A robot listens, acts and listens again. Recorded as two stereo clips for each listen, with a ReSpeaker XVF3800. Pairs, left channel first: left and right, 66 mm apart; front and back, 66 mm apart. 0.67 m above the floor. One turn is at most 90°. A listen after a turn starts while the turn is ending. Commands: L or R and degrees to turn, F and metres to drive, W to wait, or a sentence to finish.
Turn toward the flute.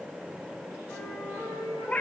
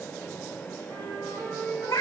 L90
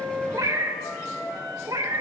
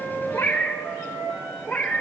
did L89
L85
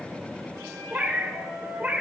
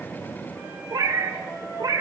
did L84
Found it: a flute, straight ahead, over 4 m away.